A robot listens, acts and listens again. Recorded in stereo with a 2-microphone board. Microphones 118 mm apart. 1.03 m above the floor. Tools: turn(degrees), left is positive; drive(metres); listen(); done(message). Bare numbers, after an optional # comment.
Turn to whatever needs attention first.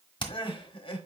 # The crying: about 45° left or 135° left.
turn(45)
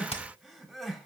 done("Found it: crying, straight ahead, 1 to 2 m away.")